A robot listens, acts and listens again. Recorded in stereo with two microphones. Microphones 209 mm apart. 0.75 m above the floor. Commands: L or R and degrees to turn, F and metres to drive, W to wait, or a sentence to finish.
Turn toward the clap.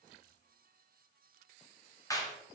L30
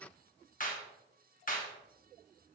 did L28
L135
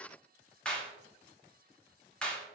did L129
Found it: a clap, straight ahead, under 1 m away.